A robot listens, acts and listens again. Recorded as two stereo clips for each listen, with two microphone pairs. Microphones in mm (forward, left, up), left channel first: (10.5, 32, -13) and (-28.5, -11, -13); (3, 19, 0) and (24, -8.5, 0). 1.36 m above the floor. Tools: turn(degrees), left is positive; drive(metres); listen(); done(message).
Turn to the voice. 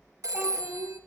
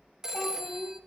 turn(degrees=165)
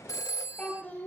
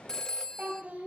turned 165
turn(degrees=-15)
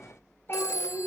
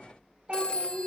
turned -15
done("Facing the child speaking, 2 to 4 m away.")